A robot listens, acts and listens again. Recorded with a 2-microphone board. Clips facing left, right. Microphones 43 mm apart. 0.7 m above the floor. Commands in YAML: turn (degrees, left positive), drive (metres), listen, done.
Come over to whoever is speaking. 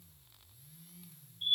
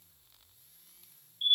listen: true
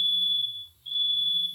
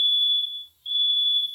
listen: true
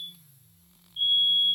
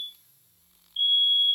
done: "I can't make out anyone speaking, only a fire alarm."